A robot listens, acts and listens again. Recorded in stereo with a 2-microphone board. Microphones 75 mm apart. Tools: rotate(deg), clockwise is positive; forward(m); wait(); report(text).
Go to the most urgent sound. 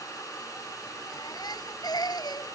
rotate(-70)
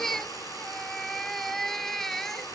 forward(1.0)
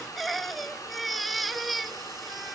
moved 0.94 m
forward(1.0)
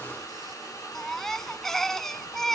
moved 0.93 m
forward(1.0)
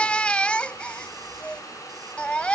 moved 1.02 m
rotate(-20)
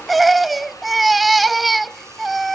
forward(1.0)
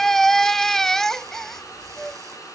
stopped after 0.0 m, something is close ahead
report("I am next to the baby crying.")